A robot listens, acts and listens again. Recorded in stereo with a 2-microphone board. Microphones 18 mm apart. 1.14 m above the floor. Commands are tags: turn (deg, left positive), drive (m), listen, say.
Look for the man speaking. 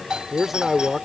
<turn deg="-30"/>
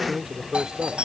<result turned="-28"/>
<turn deg="-145"/>
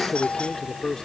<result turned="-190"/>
<turn deg="35"/>
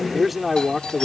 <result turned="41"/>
<turn deg="-10"/>
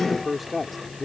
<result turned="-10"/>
<turn deg="-10"/>
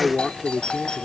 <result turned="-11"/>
<say>Found it: a man speaking, straight ahead.</say>